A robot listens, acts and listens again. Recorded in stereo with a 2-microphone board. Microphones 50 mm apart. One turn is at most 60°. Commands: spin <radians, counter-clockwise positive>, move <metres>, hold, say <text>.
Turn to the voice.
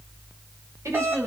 spin -1.05
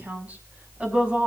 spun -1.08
spin -0.44
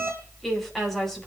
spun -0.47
say Found it: a woman speaking, straight ahead, over 4 m away.